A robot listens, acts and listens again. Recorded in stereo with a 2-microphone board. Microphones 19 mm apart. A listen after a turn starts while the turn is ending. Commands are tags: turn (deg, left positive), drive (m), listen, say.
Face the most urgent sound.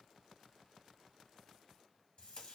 <listen/>
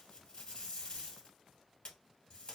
<listen/>
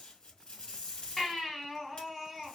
<turn deg="30"/>
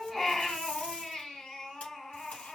<turn deg="150"/>
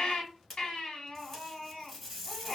<turn deg="50"/>
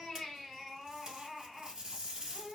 <say>Facing the baby crying, 1 to 2 m away.</say>